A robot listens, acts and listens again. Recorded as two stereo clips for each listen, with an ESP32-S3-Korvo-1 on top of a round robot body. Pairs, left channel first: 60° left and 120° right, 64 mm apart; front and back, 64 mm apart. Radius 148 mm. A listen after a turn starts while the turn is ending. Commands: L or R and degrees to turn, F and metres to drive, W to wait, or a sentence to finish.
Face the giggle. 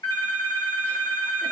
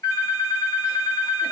W
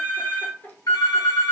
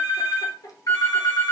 Found it: a giggle, straight ahead, 1 to 2 m away.